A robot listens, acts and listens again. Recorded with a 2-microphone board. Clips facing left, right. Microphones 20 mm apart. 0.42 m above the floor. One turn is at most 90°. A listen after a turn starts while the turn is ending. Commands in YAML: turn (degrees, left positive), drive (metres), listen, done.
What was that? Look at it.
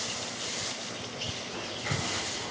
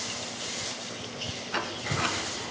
turn: -90
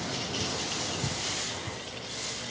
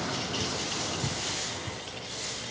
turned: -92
listen: true
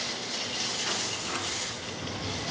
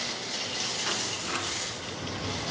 turn: -10
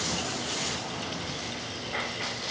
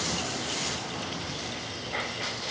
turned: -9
done: "Found it: a sliding door, straight ahead."